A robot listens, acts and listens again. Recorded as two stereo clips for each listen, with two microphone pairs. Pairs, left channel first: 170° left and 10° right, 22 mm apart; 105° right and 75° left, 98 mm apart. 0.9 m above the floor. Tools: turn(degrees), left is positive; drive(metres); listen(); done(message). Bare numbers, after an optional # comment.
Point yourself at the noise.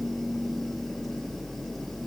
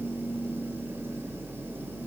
listen()
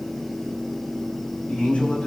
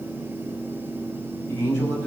# The man speaking: 170° right.
turn(-170)
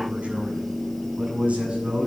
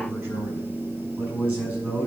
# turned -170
done("Facing the man speaking, over 4 m away.")